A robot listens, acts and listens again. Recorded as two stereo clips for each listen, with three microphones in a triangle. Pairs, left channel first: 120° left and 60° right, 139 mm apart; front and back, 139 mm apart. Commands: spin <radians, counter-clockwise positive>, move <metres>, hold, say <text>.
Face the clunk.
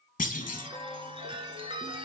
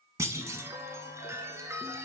spin 1.92
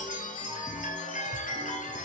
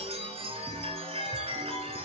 say I heard a clunk from this way, but can't make it out now.